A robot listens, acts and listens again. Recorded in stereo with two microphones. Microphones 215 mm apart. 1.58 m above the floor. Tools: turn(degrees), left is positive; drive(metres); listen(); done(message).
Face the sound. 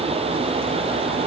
listen()
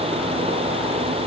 listen()
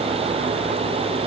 done("I can't make out anything.")